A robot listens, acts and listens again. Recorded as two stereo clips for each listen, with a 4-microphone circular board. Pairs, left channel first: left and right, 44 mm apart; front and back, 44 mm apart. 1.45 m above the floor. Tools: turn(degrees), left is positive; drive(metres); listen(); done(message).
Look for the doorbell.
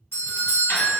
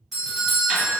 turn(degrees=95)
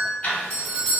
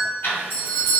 done("Found it: a doorbell, straight ahead, 1 to 2 m away.")